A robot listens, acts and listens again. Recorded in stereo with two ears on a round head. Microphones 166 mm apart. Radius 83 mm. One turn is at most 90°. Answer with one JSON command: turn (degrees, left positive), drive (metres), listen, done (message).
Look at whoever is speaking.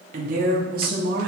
{"turn": -55}
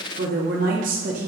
{"turn": -45}
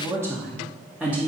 {"done": "Facing the woman speaking."}